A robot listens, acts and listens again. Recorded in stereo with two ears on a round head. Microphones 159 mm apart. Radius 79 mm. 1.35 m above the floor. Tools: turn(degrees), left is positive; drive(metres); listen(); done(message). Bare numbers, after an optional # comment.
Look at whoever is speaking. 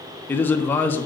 turn(30)
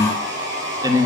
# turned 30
# So it is at 20° right.
turn(-20)
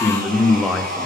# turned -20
done("Found it: a man speaking, straight ahead.")